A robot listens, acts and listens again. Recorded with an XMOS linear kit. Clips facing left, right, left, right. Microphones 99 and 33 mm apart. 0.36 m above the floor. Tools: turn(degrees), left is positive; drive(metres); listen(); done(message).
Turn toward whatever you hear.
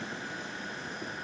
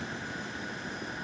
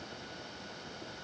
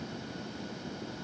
listen()
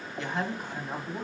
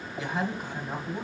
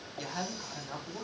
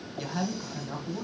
turn(degrees=30)
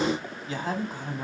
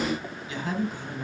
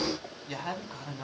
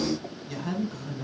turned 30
turn(degrees=140)
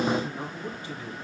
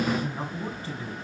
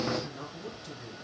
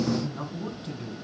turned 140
turn(degrees=-35)
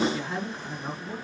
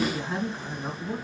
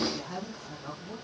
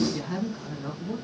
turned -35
done("Facing the man speaking, 2 to 4 m away.")